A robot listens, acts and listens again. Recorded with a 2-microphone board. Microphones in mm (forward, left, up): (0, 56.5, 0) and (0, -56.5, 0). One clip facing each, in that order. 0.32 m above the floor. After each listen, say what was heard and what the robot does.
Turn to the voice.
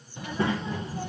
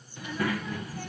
The child speaking: about 25° left or 155° left. Turn 25° left.
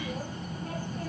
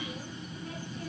So it is at 125° left. Turn 125° left.
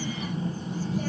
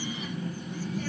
The child speaking is now 35° left. Turn 35° left.
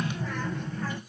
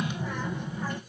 The child speaking is now 15° right. Turn 15° right.
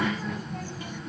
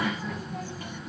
Facing the child speaking.